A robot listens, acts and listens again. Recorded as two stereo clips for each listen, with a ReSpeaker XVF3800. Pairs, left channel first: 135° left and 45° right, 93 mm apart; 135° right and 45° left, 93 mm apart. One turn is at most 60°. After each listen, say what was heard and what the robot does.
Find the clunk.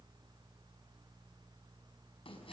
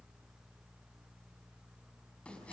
Keep listening.
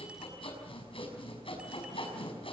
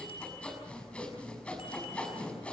Keep listening.
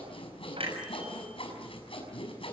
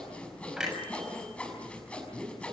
The clunk: 40° right. Turn 40° right.
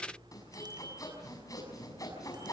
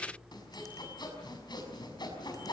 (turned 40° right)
I heard a clunk from this way, but can't make it out now.